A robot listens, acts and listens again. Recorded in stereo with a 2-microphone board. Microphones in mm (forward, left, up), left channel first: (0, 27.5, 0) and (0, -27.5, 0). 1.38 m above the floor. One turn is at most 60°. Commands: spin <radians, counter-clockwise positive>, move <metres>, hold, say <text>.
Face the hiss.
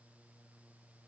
hold
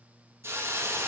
spin -0.87
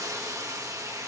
spin -1.05
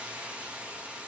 spin -0.35
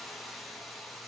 say Found it: a hiss, straight ahead.